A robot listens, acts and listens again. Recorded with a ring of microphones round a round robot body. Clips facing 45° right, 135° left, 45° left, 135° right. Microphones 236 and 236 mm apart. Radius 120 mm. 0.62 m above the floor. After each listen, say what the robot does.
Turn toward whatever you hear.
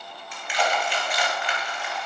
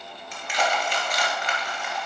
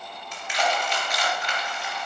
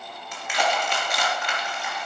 Turn 175° right.
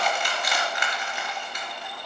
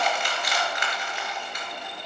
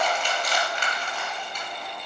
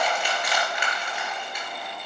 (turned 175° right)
Turn 55° right.
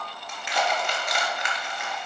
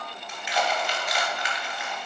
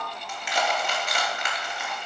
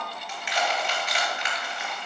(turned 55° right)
Facing the crushing.